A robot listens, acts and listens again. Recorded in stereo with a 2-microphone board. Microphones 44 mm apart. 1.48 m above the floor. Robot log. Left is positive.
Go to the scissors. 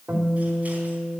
cmd idle
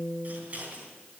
note: The scissors: about 40° right or 140° right.
cmd yaw -40
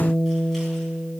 cmd idle
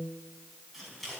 cmd fwd 1.0
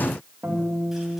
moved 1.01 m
cmd idle
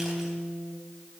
cmd idle
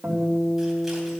end: I heard scissors from this way, but can't make it out now. I did not reach it.